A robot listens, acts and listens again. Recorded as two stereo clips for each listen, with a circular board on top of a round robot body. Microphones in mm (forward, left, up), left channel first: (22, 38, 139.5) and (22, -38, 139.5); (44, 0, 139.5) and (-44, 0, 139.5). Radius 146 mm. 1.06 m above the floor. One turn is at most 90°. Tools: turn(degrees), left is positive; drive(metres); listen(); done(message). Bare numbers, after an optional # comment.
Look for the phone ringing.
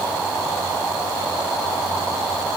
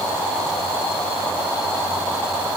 listen()
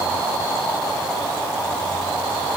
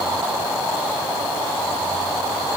listen()
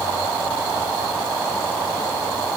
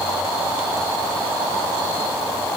done("I can't make out a phone ringing to turn to.")